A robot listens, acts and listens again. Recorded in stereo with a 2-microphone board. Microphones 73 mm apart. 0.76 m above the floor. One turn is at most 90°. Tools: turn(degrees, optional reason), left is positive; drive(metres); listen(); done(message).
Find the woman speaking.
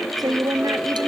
turn(degrees=-55, reason="The woman speaking: about 55° right or 125° right.")
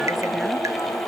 listen()
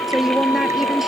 done("Facing the woman speaking.")